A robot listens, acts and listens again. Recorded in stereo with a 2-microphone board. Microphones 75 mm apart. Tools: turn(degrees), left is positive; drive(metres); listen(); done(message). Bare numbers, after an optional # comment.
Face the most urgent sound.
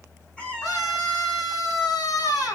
# The scream: about 55° left or 125° left.
turn(55)
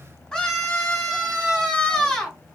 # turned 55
# So it is at 10° left.
turn(10)
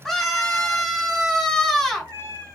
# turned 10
done("Found it: a scream, straight ahead, 2 to 4 m away.")